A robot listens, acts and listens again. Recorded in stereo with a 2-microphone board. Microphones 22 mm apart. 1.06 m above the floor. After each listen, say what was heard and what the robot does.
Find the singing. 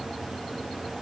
Keep listening.
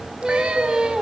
The singing: about 40° right or 140° right. Turn 40° right.
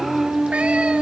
So it is at 100° right. Turn 100° right.
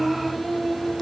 The singing is now 15° left. Turn 15° left.
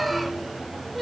Found it: singing, straight ahead.